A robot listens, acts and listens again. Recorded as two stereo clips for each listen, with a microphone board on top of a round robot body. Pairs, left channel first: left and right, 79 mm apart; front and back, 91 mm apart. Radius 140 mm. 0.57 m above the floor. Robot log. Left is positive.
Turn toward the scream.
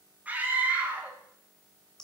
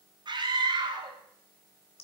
note: The scream: 155° right.
cmd yaw -155
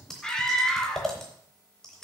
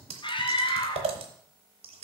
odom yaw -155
note: The scream is now 10° left.
cmd yaw +10
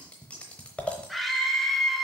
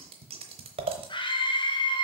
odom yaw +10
end: Facing the scream, 1 to 2 m away.